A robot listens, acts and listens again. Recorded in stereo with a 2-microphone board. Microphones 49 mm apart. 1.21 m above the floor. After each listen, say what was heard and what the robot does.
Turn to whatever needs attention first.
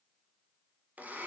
Keep listening.
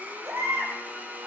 The baby crying: about 65° right or 115° right. Turn 65° right.
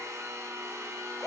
Facing the baby crying.